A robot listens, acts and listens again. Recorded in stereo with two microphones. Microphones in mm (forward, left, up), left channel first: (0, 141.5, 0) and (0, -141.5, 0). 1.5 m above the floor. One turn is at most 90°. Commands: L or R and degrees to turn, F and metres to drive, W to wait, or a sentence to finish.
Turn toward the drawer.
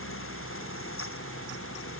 W
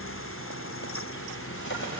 L40
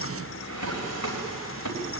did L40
L90
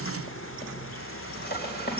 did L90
L35
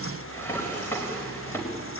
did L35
L10
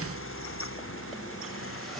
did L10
W
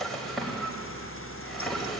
Found it: a drawer, straight ahead.